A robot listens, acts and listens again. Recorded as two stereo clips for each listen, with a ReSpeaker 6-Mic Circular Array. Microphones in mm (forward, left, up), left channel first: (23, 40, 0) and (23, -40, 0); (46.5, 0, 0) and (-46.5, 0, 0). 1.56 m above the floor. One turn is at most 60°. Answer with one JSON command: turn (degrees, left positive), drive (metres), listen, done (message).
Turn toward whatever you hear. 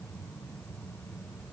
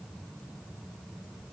{"listen": true}
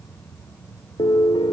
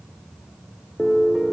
{"turn": 60}
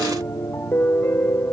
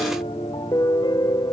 {"turn": 30}
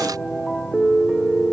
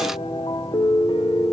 {"done": "Facing the piano."}